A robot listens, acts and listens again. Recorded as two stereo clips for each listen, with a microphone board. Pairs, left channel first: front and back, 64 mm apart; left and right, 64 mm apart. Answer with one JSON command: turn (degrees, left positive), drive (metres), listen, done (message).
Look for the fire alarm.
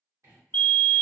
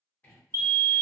{"turn": -60}
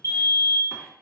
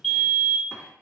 {"done": "Facing the fire alarm."}